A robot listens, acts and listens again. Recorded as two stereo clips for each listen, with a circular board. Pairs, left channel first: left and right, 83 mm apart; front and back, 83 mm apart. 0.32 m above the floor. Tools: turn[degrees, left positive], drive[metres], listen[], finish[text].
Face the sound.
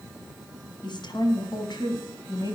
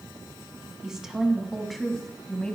Thought: The woman speaking: 80° left.
Action: turn[80]
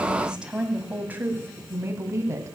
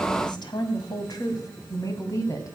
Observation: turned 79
Thought: The woman speaking is now 45° right.
Action: turn[-45]
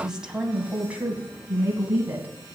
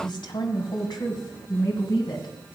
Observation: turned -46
Thought: The woman speaking is now 25° right.
Action: turn[-25]
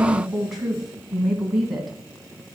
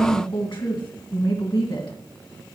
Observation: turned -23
Action: finish[Found it: a woman speaking, straight ahead.]